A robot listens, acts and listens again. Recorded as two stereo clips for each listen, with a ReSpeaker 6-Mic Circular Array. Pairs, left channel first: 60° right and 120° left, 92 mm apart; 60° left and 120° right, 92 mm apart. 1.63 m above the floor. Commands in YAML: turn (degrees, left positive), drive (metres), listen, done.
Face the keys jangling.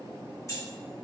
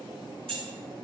turn: -115
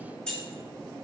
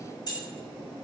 turn: 20
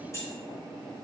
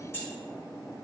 done: "Facing the keys jangling, 2 to 4 m away."